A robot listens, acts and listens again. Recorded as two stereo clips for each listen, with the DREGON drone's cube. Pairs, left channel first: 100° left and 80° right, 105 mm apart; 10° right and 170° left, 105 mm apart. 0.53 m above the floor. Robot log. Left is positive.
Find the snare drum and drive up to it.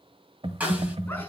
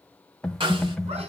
note: The snare drum: 155° right.
cmd yaw -155
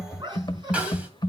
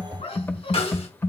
cmd fwd 1.0
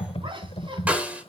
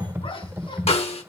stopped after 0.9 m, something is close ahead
end: I am next to the snare drum.